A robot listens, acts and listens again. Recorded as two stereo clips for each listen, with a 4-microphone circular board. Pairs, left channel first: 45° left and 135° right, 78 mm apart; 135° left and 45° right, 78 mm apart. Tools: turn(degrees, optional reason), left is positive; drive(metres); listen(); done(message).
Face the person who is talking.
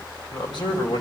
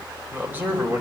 turn(degrees=20, reason="The man speaking: 20° left.")
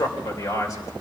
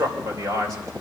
done("Facing the man speaking, 2 to 4 m away.")